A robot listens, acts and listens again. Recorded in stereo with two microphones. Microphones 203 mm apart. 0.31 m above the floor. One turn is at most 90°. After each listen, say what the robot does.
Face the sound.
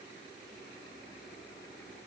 Keep listening.
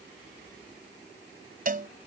Turn 45° right.
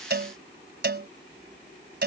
Turn 80° right.
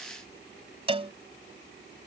Turn 35° right.
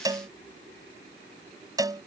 Turn 20° right.
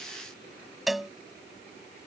Found it: a cowbell, straight ahead.